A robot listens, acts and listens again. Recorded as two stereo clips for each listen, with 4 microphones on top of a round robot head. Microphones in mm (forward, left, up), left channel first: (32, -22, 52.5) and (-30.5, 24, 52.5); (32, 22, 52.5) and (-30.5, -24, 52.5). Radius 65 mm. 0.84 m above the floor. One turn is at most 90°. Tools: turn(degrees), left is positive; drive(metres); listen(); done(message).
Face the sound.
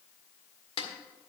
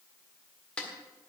turn(degrees=-40)
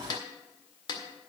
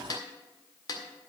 done("Found it: a snare drum, straight ahead.")